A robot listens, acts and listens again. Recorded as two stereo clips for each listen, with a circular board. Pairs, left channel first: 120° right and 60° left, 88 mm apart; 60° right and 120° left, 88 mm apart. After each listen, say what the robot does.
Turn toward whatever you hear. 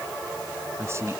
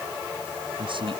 Turn 115° left.
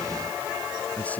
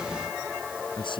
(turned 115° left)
Turn 50° right.
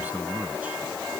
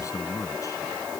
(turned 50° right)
Turn 10° right.
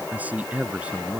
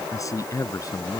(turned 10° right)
Turn 15° right.
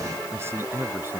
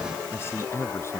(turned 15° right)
Facing the man speaking.